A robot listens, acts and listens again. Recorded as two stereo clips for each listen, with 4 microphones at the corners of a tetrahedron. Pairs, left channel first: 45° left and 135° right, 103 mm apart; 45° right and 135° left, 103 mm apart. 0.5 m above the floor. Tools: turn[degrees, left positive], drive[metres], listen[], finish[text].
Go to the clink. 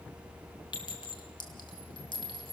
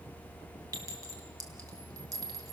Thought: The clink: 85° left.
Action: turn[85]
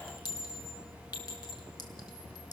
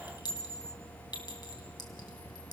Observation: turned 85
Action: drive[1.0]
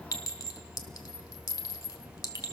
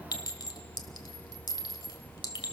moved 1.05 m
Action: drive[1.0]
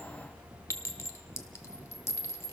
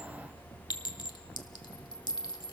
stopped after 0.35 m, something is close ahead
Thought: The clink is now 15° right.
Action: turn[-15]
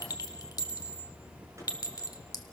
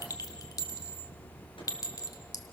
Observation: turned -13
Action: finish[I am next to the clink.]